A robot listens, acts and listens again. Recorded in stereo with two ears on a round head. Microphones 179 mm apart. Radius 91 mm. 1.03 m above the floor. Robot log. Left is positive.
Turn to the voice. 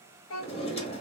note: The child speaking: about 70° left or 110° left.
cmd yaw +70
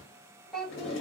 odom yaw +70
end: Facing the child speaking.